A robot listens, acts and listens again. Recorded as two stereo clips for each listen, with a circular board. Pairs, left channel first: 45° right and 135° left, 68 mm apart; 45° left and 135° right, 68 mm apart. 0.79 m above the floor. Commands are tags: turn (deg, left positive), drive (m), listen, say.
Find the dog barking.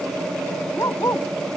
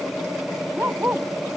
<turn deg="-75"/>
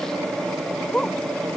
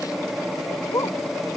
<turn deg="20"/>
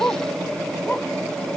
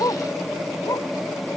<turn deg="15"/>
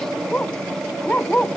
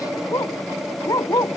<turn deg="20"/>
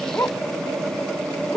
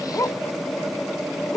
<say>Found it: a dog barking, straight ahead.</say>